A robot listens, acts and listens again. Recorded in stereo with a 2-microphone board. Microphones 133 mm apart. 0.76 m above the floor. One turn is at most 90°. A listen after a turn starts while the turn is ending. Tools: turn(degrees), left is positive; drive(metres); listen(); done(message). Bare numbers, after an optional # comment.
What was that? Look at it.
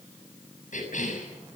# The cough: about 70° left or 110° left.
turn(70)
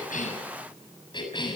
# So it is at 35° left.
turn(35)
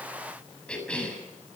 # The cough is now 10° left.
turn(10)
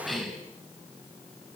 done("Found it: a cough, straight ahead, over 4 m away.")